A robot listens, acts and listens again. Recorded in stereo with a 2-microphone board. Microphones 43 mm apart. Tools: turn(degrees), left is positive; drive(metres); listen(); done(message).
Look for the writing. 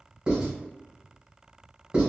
turn(degrees=-25)
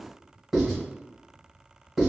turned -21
done("Found it: writing, straight ahead, 1 to 2 m away.")